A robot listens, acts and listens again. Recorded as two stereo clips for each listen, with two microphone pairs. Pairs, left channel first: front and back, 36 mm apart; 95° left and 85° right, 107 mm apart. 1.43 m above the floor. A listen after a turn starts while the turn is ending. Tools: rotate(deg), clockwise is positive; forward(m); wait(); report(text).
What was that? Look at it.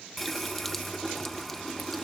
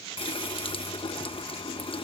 rotate(-85)
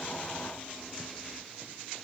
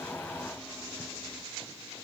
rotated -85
wait()
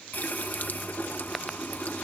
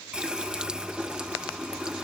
rotate(10)
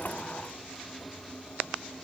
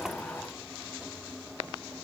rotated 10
report("Found it: a running tap, straight ahead.")